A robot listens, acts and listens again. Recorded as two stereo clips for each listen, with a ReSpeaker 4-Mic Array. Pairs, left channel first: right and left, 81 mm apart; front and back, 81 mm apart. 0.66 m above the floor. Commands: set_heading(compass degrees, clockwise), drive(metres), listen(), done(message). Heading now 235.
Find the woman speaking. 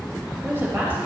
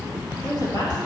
set_heading(205)
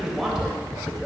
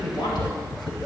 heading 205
done("Found it: a woman speaking, straight ahead, 2 to 4 m away.")